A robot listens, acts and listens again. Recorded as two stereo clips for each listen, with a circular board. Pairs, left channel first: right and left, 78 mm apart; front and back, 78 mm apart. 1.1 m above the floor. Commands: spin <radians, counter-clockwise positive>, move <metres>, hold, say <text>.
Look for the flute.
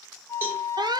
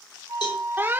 spin -2.44
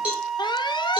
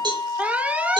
say Facing the flute.